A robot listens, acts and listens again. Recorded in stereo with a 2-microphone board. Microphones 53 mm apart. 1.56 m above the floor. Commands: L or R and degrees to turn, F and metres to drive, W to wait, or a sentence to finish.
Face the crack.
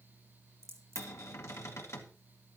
R70
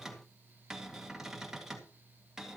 W
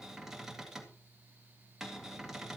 I heard a crack, but can't make it out now. It was about straight ahead or 40° right.